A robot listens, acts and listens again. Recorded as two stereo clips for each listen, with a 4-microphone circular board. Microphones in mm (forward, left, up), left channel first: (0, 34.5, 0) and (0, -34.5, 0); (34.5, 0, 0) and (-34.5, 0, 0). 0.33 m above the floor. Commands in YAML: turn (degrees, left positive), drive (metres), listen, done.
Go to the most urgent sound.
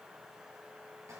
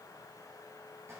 listen: true
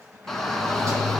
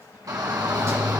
turn: 175
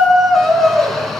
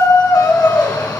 drive: 1.0
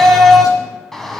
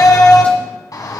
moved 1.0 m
drive: 1.0
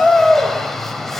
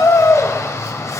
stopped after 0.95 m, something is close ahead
done: "Arrived at the shout, straight ahead."